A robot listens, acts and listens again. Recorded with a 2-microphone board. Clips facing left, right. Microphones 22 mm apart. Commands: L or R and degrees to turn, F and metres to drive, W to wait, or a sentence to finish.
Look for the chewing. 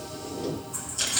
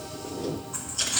R30
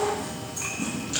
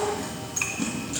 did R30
R120
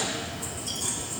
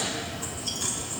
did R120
R30
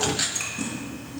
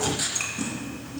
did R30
Found it: chewing, straight ahead.